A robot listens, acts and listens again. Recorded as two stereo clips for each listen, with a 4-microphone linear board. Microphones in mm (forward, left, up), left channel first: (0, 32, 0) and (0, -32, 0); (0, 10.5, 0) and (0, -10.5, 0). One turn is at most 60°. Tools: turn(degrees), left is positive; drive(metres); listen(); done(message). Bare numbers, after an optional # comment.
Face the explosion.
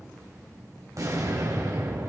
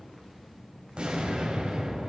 # The explosion: about 60° right or 120° right.
turn(-60)
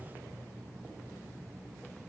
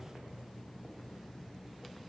listen()
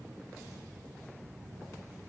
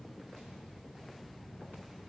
done("I heard an explosion, but can't make it out now. It was about straight ahead or 60° right.")